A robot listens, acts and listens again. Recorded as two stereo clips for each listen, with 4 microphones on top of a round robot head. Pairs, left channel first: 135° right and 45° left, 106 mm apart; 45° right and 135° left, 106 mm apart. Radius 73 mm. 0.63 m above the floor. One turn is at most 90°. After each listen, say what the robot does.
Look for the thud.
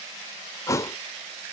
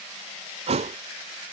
Turn 90° left.
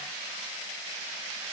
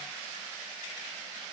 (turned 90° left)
Turn 75° left.
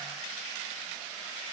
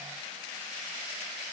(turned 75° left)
I heard a thud from this way, but can't make it out now.